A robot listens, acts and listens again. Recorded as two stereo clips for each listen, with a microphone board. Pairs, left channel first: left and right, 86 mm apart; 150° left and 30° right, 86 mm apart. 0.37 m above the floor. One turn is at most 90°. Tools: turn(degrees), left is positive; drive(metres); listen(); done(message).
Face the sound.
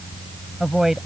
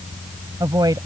turn(degrees=-10)
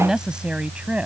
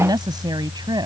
turn(degrees=-15)
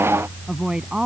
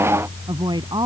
turn(degrees=-10)
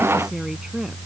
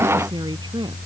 turn(degrees=-10)
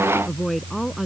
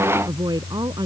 done("Found it: a woman speaking, straight ahead.")